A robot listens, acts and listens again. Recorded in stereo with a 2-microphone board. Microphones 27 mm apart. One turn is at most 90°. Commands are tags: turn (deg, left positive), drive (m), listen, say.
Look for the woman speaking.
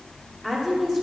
<turn deg="30"/>
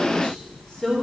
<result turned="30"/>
<turn deg="90"/>
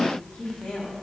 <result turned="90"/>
<turn deg="65"/>
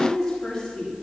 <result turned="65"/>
<turn deg="15"/>
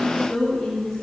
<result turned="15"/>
<say>Found it: a woman speaking, straight ahead.</say>